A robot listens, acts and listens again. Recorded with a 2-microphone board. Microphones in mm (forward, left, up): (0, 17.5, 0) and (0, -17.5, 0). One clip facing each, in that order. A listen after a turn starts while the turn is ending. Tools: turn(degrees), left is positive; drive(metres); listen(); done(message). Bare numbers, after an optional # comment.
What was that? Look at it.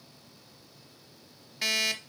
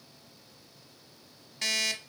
turn(30)
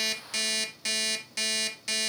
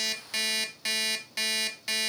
# So it is at 20° right.
turn(-20)
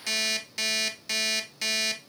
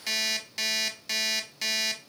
done("Found it: an alarm clock, straight ahead.")